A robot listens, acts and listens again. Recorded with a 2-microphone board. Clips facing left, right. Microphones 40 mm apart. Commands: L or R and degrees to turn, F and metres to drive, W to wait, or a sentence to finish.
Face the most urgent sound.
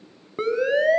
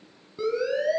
L50
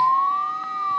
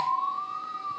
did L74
L50
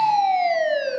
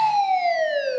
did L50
Facing the siren.